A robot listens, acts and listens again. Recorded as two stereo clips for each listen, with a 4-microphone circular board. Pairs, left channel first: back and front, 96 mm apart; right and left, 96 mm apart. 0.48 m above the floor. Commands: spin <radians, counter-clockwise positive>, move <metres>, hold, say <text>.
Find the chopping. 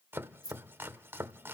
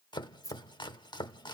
spin -1.05
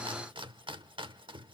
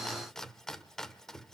say Facing the chopping, under 1 m away.